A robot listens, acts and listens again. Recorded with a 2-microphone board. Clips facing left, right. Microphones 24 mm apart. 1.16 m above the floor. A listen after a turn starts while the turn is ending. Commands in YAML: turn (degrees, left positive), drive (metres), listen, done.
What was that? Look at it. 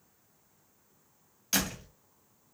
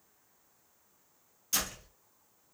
turn: 45
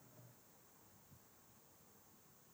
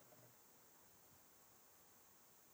listen: true
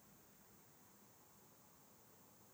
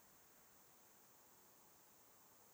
done: "I heard a door slam, but can't make it out now. It was about straight ahead or 90° left."